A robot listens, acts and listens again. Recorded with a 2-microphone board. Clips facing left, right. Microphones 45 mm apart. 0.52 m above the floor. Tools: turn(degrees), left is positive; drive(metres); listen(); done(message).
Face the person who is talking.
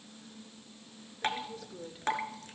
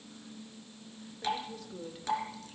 turn(degrees=30)
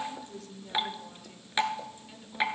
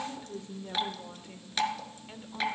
turn(degrees=-30)
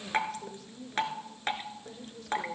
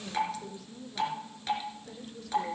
done("Facing the woman speaking.")